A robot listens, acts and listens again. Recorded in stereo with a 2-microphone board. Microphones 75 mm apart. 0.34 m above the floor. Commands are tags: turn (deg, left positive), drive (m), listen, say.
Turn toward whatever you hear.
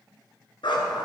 <turn deg="90"/>
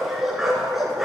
<say>Found it: a dog barking, straight ahead.</say>